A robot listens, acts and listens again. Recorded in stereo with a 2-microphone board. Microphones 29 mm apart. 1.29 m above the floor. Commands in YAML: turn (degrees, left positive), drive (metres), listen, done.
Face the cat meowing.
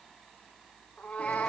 turn: 60
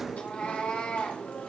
turn: 45
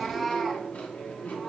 turn: 10
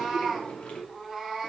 done: "Facing the cat meowing, over 4 m away."